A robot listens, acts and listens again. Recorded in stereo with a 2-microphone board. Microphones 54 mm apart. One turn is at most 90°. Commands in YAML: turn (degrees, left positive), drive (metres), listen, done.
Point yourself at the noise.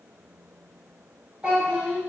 turn: -25
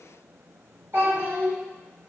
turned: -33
turn: -90
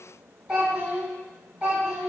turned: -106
turn: -15
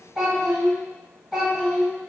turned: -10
done: "Facing the child speaking."